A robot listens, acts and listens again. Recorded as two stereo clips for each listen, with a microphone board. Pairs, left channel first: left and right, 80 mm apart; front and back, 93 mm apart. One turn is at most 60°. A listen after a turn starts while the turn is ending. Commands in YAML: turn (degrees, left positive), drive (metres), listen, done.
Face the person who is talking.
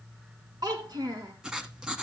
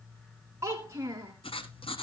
turn: -60
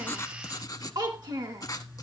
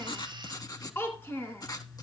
turn: -60
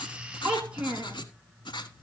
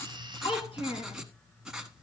turn: -15
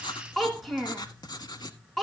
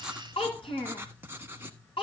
done: "Found it: a child speaking, straight ahead, 1 to 2 m away."